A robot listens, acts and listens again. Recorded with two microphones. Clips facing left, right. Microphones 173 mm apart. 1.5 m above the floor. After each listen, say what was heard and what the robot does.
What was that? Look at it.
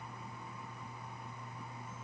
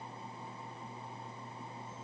Keep listening.
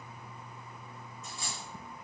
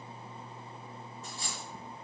The dropped coin: about 35° right or 145° right. Turn 35° right.
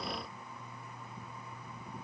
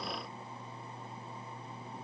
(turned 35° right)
Keep listening.
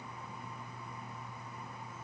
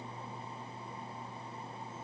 I heard a dropped coin, but can't make it out now. It was about straight ahead or 110° right.